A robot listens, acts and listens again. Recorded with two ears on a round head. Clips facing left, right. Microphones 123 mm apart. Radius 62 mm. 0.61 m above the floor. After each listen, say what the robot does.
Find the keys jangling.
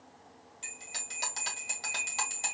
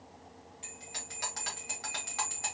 Keep listening.
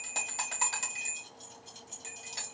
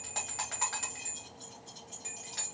Turn 30° left.
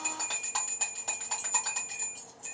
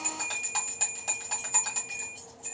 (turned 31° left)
Turn 20° left.
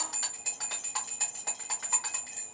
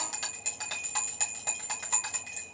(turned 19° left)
Keep listening.
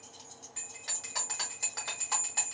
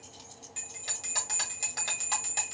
Found it: keys jangling, straight ahead, 2 to 4 m away.